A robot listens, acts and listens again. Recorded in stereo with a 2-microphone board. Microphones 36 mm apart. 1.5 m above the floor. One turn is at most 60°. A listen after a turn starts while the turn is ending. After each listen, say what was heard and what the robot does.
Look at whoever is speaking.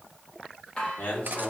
The man speaking: about 60° left or 120° left. Turn 60° left.
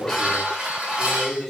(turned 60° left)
Facing the man speaking.